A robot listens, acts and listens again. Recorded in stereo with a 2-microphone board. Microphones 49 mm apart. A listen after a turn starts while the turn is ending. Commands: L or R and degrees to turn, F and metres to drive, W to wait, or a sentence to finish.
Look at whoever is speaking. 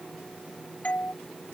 W
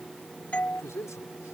L90
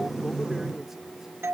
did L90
W
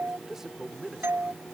Facing the man speaking.